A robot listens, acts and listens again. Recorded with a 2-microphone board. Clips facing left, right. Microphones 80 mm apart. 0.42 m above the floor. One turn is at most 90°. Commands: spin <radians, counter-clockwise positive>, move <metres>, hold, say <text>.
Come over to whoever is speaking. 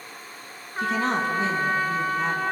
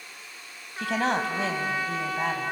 spin -1.13
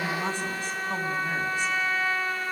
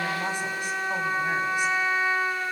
hold
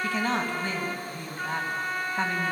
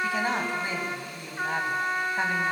spin -0.26
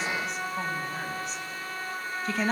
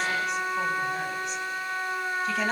move 1.0
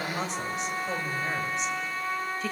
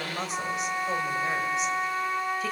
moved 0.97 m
move 1.0
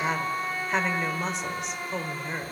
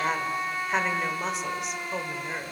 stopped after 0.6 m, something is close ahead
say Arrived at the woman speaking, straight ahead.